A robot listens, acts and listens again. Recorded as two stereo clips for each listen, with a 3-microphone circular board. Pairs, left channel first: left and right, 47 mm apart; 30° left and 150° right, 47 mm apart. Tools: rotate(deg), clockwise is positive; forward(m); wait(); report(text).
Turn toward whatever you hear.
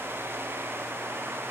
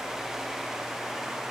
wait()
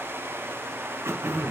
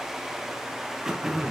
rotate(70)
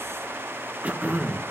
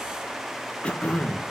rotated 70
rotate(30)
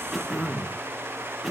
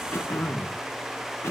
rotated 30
report("Facing the throat clearing.")